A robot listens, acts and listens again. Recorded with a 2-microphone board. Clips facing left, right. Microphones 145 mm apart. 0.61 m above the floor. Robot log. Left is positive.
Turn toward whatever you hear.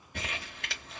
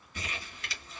note: The crumpling: about 55° left or 125° left.
cmd yaw +55
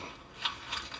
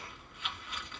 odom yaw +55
note: So it is at 70° left.
cmd yaw +70
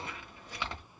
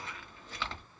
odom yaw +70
note: The crumpling is now 15° left.
cmd yaw +15
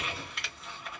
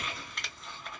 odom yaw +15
end: Found it: crumpling, straight ahead, under 1 m away.